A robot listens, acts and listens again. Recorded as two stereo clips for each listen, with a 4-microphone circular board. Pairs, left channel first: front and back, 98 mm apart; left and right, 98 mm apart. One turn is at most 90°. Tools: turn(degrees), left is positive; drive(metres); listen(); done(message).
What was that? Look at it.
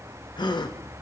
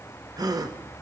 turn(degrees=-40)
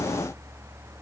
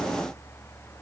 done("I heard a gasp from this way, but can't make it out now.")